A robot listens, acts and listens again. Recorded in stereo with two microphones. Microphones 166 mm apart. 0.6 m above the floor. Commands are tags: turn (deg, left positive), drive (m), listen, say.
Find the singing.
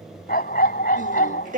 <turn deg="-55"/>
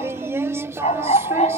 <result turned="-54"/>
<turn deg="-20"/>
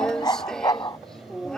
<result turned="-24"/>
<say>Facing the singing.</say>